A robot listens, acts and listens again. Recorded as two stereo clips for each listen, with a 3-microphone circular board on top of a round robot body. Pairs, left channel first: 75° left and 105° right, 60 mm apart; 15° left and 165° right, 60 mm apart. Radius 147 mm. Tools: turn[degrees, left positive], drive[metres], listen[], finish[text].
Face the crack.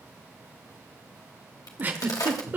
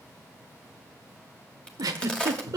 Thought: The crack: 90° left.
Action: turn[90]
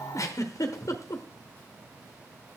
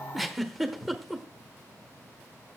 Action: finish[Facing where the crack came from. I can't hear it now.]